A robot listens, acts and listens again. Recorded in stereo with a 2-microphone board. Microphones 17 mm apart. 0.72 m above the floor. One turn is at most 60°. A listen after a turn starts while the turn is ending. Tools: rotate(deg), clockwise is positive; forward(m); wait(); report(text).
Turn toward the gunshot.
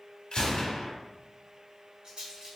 rotate(-60)
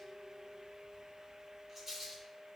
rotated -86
wait()
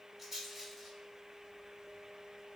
report("I heard a gunshot, but can't make it out now. It was about 20° right or 30° left.")